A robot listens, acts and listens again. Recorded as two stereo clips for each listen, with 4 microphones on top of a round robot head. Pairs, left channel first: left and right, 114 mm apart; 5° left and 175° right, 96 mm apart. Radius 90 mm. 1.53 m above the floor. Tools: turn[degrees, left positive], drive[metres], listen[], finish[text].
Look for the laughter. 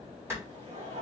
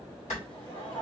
Thought: The laughter: 60° right.
Action: turn[-60]
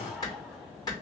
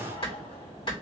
Action: finish[Facing the laughter.]